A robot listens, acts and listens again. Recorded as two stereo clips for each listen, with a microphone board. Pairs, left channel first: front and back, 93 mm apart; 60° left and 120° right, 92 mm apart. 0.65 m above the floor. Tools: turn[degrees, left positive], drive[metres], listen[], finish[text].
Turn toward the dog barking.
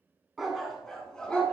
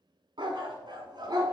Thought: The dog barking: 75° right.
Action: turn[-75]
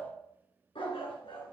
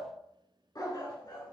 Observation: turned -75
Thought: The dog barking is now 20° left.
Action: turn[20]
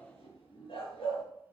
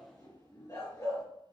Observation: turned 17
Thought: The dog barking is now 15° left.
Action: turn[15]
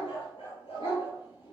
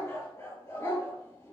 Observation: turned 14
Action: finish[Found it: a dog barking, straight ahead, over 4 m away.]